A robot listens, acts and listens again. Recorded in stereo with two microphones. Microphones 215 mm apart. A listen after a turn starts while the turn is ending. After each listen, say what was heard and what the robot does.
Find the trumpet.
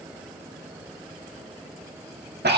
Keep listening.
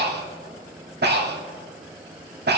Keep listening.
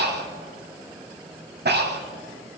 I can't make out a trumpet, only breathing.